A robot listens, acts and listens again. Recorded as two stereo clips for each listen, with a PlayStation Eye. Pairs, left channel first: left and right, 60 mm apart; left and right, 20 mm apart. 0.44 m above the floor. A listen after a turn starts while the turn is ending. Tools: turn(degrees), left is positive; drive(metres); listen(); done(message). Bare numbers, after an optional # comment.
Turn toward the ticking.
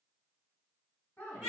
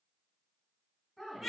listen()
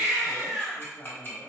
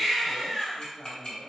# The ticking: about 35° left or 145° left.
turn(35)
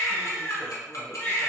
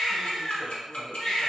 # So it is at 105° left.
turn(105)
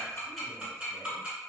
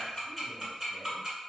# The ticking is now 20° right.
turn(-20)
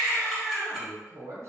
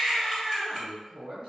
listen()
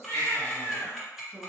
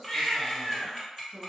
done("Found it: ticking, straight ahead, 1 to 2 m away.")